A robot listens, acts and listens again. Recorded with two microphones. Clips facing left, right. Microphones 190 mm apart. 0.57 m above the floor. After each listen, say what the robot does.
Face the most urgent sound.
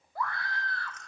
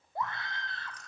Turn 25° right.
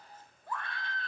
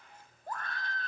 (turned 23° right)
Turn 130° right.
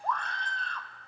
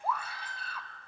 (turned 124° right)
Turn 10° right.
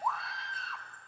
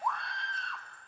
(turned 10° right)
Found it: a scream, straight ahead.